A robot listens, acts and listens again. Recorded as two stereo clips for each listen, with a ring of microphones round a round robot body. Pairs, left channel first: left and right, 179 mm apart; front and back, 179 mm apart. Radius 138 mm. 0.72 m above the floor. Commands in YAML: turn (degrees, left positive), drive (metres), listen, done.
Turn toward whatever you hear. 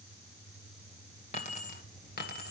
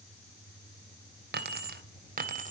turn: 135
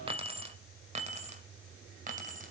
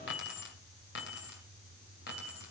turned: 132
turn: -45
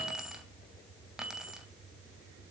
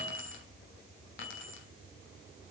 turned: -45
done: "Facing the keys jangling, 2 to 4 m away."